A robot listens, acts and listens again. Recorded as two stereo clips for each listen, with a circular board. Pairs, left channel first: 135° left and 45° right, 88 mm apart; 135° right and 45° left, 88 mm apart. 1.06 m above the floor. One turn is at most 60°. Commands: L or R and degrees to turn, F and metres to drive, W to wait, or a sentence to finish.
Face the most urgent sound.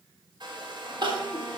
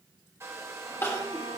R60
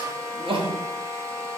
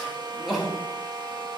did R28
R45
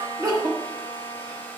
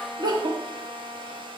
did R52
Facing the crying, 1 to 2 m away.